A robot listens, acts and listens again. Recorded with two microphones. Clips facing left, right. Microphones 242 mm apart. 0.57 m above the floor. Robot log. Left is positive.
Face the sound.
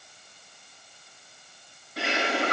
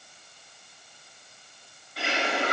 note: The bird: about 45° left or 135° left.
cmd yaw +45
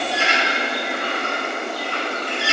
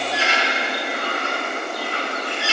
note: So it is at 90° left.
cmd yaw +90
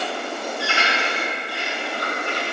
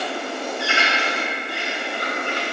note: The bird is now 25° right.
cmd yaw -25
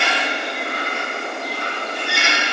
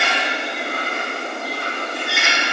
end: Found it: a bird, straight ahead.